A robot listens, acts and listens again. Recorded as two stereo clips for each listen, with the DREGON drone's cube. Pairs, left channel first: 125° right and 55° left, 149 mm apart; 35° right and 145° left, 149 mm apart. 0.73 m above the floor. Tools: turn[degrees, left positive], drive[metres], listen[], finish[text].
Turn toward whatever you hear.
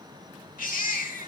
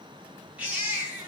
Thought: The baby crying: 135° right.
Action: turn[-135]
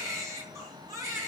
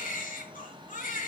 Thought: The baby crying is now 15° right.
Action: turn[-15]
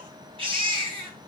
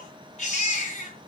Action: finish[Facing the baby crying.]